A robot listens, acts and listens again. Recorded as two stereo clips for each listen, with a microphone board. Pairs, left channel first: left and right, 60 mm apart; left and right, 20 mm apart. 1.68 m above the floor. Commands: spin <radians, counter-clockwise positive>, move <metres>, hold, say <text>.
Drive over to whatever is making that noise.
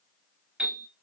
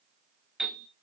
spin -0.52
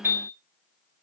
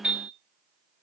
spin -2.36
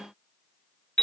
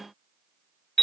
spin 0.17
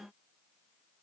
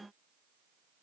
hold
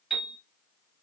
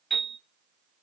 move 1.0
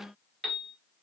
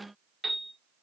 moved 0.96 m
move 1.0
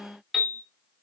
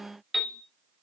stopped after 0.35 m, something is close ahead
say Arrived at the piano, straight ahead.